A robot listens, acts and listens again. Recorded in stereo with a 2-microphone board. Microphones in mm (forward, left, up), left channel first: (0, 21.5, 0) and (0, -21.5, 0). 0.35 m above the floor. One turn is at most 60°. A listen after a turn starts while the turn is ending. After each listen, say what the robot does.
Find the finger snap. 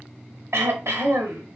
Keep listening.
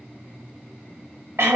Keep listening.
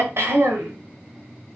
I can't make out a finger snap to turn to.